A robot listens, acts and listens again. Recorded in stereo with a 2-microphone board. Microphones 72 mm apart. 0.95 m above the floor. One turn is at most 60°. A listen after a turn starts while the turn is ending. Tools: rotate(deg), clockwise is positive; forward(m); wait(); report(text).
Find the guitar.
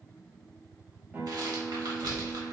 rotate(20)
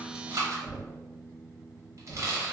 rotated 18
report("Facing the guitar, 1 to 2 m away.")